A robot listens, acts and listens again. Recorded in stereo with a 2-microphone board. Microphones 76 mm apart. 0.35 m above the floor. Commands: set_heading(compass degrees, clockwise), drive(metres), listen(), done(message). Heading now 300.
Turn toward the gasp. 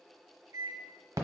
listen()
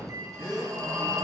set_heading(255)
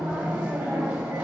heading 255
listen()
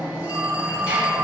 done("I heard a gasp, but can't make it out now. It was about straight ahead or 90° left.")